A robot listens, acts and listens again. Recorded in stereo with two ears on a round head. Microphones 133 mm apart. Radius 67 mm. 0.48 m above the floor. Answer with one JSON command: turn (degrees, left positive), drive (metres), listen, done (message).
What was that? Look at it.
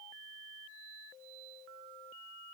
{"listen": true}
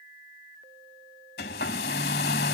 {"turn": 70}
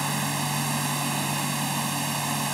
{"done": "Facing the hair dryer."}